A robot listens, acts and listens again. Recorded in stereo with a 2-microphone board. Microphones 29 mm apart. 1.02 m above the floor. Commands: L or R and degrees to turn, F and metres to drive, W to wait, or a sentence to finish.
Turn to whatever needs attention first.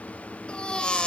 L35
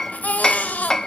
L110
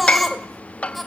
Facing the baby crying.